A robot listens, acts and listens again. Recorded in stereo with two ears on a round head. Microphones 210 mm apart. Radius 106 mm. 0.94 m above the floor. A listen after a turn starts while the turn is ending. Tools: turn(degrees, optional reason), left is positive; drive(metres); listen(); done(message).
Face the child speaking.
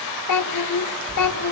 turn(degrees=90)
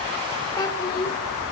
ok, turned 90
turn(degrees=20, reason="So it is at 20° left.")
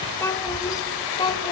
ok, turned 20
turn(degrees=20, reason="The child speaking is now 20° left.")
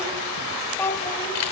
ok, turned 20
turn(degrees=10, reason="The child speaking is now 10° left.")
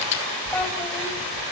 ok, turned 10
listen()
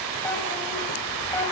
listen()
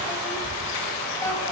done("Facing where the child speaking came from. I can't hear it now.")